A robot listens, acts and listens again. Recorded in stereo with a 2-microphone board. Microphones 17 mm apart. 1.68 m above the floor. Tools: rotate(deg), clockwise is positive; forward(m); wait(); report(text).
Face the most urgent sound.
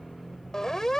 rotate(-35)
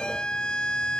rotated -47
rotate(-95)
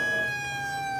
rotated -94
report("Found it: a siren, straight ahead.")